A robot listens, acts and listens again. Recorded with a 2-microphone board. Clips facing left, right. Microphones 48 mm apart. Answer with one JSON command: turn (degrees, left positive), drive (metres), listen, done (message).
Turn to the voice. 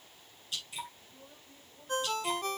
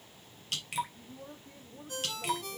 {"turn": -75}
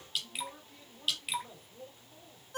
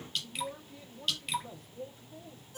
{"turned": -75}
{"turn": 10}
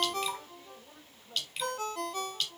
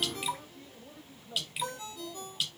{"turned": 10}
{"turn": 10}
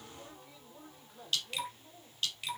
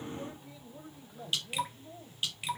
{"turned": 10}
{"done": "Facing the man speaking, 2 to 4 m away."}